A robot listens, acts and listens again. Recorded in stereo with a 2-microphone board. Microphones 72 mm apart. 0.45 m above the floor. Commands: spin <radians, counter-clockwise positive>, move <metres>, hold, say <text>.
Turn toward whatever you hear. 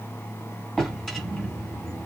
spin 0.52
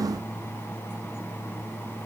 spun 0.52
hold
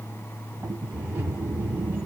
spin -0.44
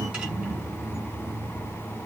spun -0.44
spin -0.17
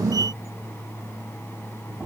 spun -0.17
say Found it: a drawer, straight ahead.